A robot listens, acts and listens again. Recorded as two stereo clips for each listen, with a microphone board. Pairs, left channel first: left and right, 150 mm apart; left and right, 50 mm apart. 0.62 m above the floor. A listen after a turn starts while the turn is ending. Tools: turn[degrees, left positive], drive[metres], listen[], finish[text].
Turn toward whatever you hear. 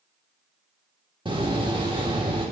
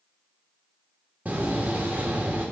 Thought: The door slam: about 35° right or 145° right.
Action: turn[-35]
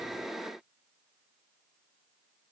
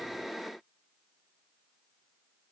Action: listen[]
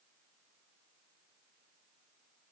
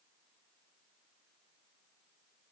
Action: finish[I heard a door slam, but can't make it out now. It was about straight ahead or 110° right.]